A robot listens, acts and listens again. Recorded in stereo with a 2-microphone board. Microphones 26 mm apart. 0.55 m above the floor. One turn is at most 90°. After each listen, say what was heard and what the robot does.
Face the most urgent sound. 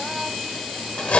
Keep listening.
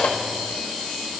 Keep listening.
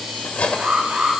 The alarm: about 70° right or 110° right. Turn 70° right.
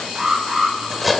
So it is at 35° right. Turn 35° right.
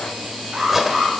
The alarm is now 25° right. Turn 25° right.
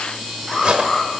The alarm is now 10° left. Turn 10° left.
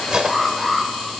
Found it: an alarm, straight ahead, 1 to 2 m away.